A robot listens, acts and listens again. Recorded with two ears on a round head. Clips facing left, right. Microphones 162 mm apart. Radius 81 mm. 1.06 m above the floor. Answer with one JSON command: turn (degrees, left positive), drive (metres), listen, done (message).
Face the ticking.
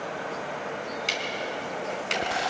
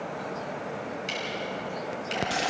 {"turn": 65}
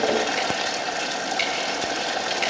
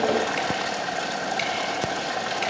{"listen": true}
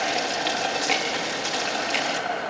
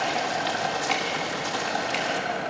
{"listen": true}
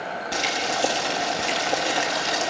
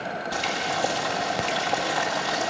{"done": "I heard ticking, but can't make it out now. It was about straight ahead or 50° left."}